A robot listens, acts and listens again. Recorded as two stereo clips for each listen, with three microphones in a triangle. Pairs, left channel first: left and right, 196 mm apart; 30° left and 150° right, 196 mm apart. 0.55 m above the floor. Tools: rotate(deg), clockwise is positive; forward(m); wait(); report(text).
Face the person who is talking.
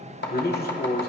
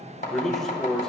rotate(-120)
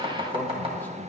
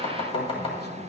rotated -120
rotate(-15)
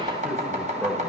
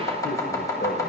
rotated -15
report("Facing the man speaking.")